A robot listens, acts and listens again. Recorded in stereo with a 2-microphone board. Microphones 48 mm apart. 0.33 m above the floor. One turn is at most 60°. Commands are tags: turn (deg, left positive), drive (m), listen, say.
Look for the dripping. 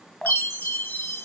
<turn deg="20"/>
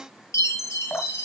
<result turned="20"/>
<turn deg="60"/>
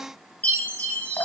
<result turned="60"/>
<turn deg="60"/>
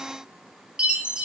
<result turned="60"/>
<turn deg="15"/>
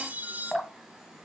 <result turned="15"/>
<say>Found it: dripping, straight ahead, under 1 m away.</say>